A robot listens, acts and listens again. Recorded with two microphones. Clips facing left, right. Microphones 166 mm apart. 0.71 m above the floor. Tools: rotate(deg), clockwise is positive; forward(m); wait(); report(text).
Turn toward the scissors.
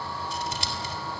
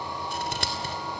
rotate(65)
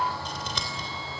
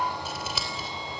report("Found it: scissors, straight ahead, 2 to 4 m away.")